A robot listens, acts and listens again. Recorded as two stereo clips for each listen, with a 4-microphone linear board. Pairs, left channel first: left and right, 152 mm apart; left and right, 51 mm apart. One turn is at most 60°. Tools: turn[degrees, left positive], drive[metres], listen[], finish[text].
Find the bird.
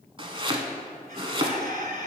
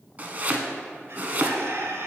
Thought: The bird: about 65° right or 115° right.
Action: turn[-60]
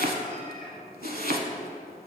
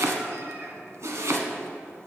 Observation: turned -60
Action: listen[]
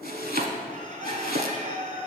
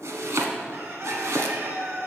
Thought: So it is at 55° right.
Action: turn[-55]
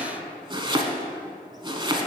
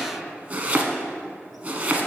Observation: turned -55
Action: listen[]
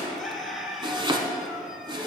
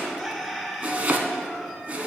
Action: finish[Found it: a bird, straight ahead.]